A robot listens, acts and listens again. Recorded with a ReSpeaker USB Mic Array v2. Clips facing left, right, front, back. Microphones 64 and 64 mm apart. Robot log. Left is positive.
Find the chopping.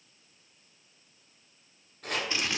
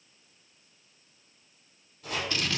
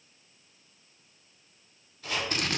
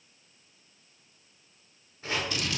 note: The chopping: 120° left.
cmd yaw +120
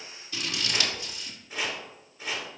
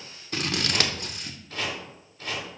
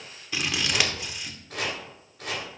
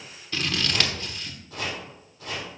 note: The chopping is now 15° left.
cmd yaw +15
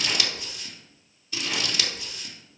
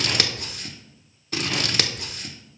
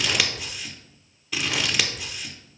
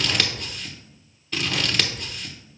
cmd idle
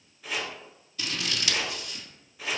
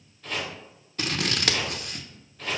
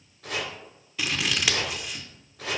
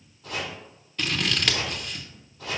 note: The chopping is now 10° left.
cmd yaw +10
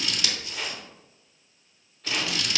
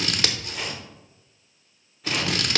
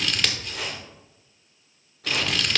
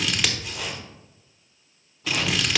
end: Facing the chopping.